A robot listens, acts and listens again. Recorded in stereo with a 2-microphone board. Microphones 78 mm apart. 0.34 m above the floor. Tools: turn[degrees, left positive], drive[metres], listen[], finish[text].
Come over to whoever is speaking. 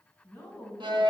Action: turn[30]
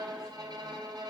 Action: listen[]
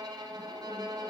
Action: listen[]
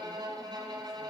Action: finish[I heard a woman speaking, but can't make it out now. It was about 15° right or 135° left. I did not reach it.]